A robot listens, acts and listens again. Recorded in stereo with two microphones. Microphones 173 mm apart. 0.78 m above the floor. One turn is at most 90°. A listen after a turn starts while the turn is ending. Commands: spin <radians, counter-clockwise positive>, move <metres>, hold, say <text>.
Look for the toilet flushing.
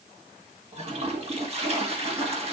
spin -0.70
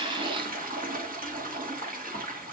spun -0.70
spin -1.57
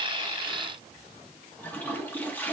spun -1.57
spin 0.17
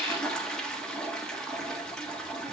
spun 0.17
say Found it: a toilet flushing, straight ahead.